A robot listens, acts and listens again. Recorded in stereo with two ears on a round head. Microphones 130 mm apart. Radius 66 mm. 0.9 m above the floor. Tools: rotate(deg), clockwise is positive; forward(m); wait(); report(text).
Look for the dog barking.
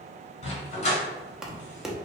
rotate(-50)
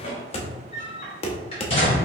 rotate(-35)
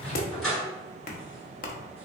report("Facing the dog barking.")